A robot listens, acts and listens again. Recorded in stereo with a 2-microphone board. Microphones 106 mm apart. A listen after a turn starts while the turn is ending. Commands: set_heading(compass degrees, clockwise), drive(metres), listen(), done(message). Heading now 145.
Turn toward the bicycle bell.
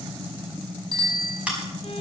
set_heading(190)
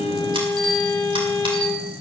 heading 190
listen()
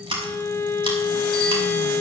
listen()
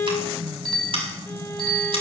done("Found it: a bicycle bell, straight ahead.")